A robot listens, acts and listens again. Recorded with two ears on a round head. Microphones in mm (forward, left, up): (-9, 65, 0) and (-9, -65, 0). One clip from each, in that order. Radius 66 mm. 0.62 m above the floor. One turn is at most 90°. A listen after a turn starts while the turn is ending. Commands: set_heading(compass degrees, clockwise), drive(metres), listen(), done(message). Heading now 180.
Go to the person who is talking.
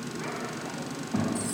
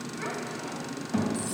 set_heading(215)
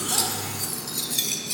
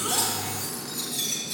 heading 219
listen()
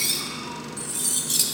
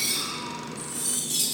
listen()
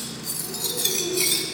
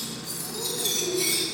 done("I heard a child speaking, but can't make it out now. It was about 5° left or 110° right. I did not reach it.")